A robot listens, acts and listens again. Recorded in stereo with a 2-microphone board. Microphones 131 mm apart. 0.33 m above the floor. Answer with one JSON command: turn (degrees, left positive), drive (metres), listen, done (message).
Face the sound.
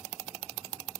{"listen": true}
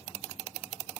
{"listen": true}
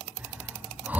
{"turn": -30}
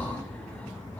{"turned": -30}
{"turn": 15}
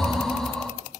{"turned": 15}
{"done": "Facing the breathing, 2 to 4 m away."}